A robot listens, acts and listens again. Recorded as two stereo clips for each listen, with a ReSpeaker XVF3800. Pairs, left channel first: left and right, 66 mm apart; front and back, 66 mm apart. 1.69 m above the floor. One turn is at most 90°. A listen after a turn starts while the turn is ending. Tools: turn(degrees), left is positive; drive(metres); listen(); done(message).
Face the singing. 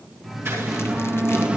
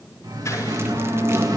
turn(degrees=-90)
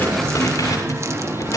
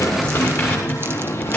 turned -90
turn(degrees=-45)
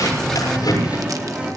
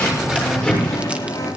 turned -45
turn(degrees=-15)
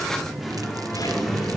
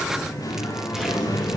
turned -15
done("Found it: singing, straight ahead.")